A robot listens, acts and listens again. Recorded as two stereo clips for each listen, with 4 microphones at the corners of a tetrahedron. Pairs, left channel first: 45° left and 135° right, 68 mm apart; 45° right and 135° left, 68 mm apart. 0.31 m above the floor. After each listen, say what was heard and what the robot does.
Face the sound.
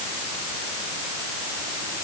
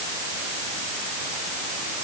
Keep listening.
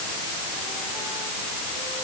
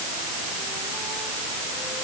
Keep listening.
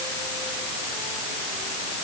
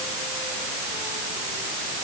I can't make out anything to turn to.